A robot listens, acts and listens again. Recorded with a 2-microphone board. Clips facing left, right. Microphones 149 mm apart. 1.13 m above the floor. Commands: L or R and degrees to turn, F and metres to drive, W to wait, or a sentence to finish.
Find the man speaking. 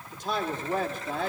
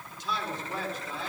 L55
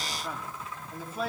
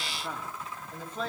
L10
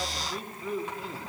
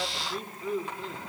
Found it: a man speaking, straight ahead, 2 to 4 m away.